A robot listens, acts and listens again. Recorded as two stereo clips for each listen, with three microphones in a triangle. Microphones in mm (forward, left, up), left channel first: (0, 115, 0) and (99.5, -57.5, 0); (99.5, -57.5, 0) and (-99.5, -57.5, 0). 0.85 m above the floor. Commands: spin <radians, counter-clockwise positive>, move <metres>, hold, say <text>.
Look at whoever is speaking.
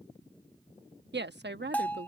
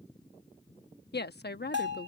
spin -0.61
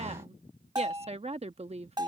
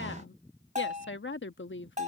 say Facing the woman speaking.